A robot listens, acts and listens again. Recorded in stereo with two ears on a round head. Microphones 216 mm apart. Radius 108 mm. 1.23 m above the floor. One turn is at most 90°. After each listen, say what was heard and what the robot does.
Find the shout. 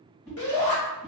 The shout: about 60° left or 120° left. Turn 60° left.
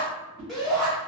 Found it: a shout, straight ahead, 1 to 2 m away.